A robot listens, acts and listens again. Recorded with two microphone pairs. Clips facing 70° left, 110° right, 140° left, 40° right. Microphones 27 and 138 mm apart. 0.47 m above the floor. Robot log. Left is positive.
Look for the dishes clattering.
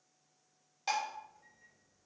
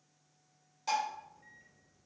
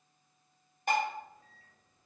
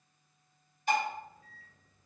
note: The dishes clattering: 125° left.
cmd yaw +125
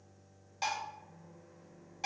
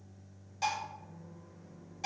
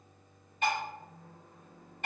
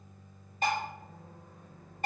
end: Facing the dishes clattering, 1 to 2 m away.